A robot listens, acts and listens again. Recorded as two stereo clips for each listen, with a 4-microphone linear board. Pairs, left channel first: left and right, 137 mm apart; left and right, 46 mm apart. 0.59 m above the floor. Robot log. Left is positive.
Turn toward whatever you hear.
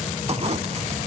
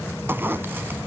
note: The zipper: about 50° right or 130° right.
cmd yaw -50
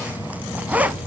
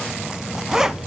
note: So it is at 15° right.
cmd yaw -15
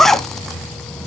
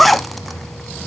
end: Found it: a zipper, straight ahead, under 1 m away.